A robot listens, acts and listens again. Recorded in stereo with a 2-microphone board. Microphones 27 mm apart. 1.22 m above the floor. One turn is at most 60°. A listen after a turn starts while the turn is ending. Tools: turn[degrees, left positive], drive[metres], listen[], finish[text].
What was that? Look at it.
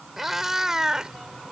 Thought: The cat meowing: about 20° right or 160° right.
Action: turn[-20]
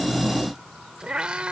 Thought: The cat meowing: about 40° right or 140° right.
Action: turn[-40]
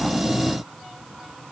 Action: listen[]
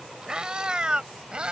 Thought: The cat meowing: about 35° right or 145° right.
Action: turn[-35]
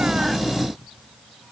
Action: listen[]
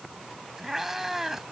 Thought: So it is at 10° right.
Action: turn[-10]
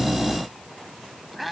Action: finish[Facing the cat meowing.]